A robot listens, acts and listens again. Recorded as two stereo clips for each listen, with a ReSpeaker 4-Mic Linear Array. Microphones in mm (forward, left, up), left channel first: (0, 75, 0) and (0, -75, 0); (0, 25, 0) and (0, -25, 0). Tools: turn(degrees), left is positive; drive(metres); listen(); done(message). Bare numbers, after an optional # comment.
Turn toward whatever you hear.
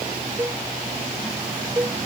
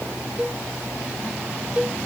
# The cowbell: about 20° right or 160° right.
turn(-20)
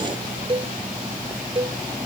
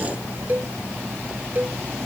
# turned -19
# So it is at 140° right.
turn(-140)
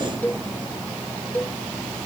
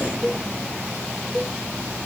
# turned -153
# The cowbell is now 10° left.
turn(10)
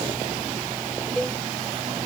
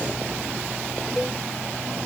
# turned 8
listen()
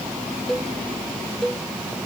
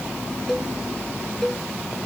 done("Facing the cowbell.")